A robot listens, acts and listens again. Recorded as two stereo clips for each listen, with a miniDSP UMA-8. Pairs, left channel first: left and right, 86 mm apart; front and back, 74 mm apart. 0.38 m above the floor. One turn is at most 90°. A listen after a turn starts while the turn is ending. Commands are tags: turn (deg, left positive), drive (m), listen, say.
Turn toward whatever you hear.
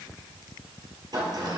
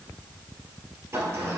<turn deg="-90"/>
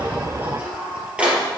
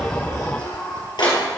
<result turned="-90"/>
<turn deg="-15"/>
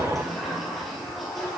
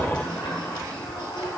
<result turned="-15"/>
<say>Found it: a sliding door, straight ahead.</say>